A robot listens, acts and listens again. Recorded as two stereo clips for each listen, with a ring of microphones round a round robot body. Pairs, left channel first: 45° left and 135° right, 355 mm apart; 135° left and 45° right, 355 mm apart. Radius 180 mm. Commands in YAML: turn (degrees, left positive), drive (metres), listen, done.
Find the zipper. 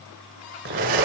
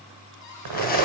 turn: -75
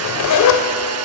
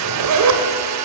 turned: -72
done: "Found it: a zipper, straight ahead."